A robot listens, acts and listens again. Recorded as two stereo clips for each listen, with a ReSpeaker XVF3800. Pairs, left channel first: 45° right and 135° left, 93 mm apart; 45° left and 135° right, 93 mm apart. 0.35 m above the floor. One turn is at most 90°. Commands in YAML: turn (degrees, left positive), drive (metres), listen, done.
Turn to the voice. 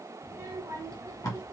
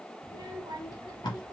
turn: 90
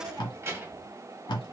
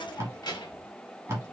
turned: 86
turn: 60
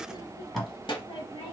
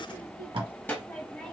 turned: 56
turn: -30
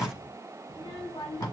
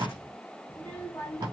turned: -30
turn: -20
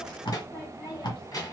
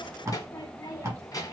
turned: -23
done: "Facing the child speaking, 1 to 2 m away."